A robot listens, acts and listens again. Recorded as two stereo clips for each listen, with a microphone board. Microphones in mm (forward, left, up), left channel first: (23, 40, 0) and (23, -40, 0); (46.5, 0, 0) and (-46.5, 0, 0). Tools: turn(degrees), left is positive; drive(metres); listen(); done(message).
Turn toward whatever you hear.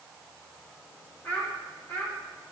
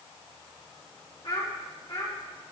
turn(degrees=20)
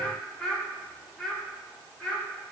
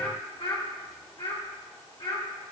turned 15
done("Facing the child speaking.")